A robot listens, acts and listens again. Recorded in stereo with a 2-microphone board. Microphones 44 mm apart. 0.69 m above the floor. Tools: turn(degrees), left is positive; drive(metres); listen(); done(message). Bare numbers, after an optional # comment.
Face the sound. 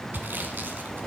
# The sawing: about 55° right or 125° right.
turn(-55)
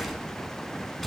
done("Found it: sawing, straight ahead.")